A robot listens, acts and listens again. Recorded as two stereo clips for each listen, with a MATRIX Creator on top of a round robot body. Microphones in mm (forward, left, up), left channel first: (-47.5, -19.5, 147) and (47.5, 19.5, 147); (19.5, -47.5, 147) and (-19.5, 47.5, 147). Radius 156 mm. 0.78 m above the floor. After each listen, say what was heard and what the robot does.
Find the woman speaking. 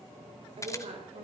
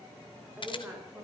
The woman speaking: 40° left. Turn 40° left.
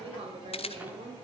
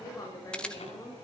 Facing the woman speaking, over 4 m away.